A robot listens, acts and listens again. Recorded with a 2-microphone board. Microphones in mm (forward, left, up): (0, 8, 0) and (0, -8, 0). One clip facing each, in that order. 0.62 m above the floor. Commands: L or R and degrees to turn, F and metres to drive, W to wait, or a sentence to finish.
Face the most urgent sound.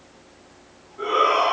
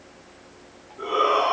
L30
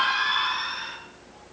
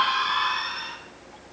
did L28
R10
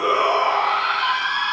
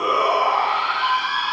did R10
Facing the shout, over 4 m away.